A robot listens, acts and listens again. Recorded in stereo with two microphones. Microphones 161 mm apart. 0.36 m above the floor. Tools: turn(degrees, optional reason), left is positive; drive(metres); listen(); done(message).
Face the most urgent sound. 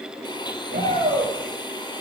turn(degrees=-70, reason="The shout: about 70° right or 110° right.")
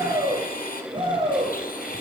turn(degrees=-35, reason="So it is at 35° right.")
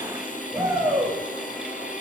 turn(degrees=-20, reason="The shout is now 20° right.")
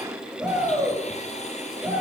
done("Found it: a shout, straight ahead, over 4 m away.")